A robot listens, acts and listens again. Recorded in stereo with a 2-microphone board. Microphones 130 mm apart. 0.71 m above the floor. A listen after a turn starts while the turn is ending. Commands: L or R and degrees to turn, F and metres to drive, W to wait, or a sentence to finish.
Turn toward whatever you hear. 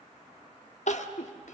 L65
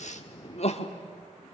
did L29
L65
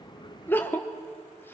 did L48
L20
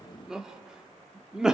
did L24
Facing the crying.